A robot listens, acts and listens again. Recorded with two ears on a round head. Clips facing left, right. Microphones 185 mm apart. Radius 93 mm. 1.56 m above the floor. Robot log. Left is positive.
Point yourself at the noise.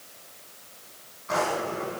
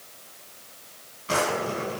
note: The drawer: about 40° right or 140° right.
cmd yaw -40
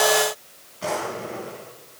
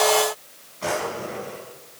end: Facing the drawer.